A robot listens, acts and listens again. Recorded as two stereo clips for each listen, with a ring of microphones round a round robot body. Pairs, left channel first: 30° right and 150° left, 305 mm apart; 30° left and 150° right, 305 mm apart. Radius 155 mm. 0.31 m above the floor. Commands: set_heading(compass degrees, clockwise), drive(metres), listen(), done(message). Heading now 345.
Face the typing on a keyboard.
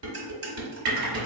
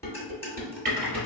set_heading(200)
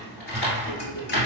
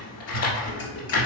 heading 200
set_heading(175)
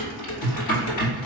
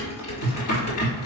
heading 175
done("Found it: typing on a keyboard, straight ahead.")